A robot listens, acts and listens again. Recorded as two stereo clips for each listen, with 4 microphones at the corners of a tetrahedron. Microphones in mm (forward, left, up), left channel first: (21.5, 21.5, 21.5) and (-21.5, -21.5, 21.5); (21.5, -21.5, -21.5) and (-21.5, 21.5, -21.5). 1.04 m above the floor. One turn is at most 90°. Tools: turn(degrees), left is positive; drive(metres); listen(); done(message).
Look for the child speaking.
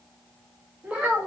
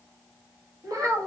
turn(degrees=90)
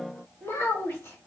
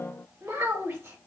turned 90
turn(degrees=90)
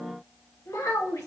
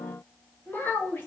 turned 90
turn(degrees=10)
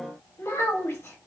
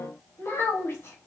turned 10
done("Facing the child speaking, 1 to 2 m away.")